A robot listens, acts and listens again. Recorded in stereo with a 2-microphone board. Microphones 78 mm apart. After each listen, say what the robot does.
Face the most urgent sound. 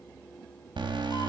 Turn 90° right.
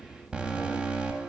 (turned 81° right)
Turn 15° right.
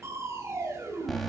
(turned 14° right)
Found it: an alarm, straight ahead, 2 to 4 m away.